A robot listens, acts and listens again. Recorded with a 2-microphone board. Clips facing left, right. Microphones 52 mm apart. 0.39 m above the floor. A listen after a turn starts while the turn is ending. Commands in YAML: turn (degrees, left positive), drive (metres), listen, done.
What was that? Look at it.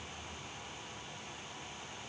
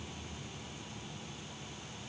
listen: true
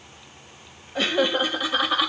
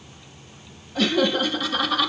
turn: 15
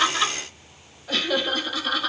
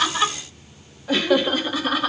turn: -20
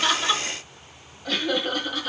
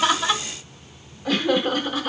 turn: -15
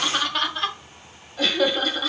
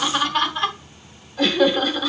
done: "Facing the laughter."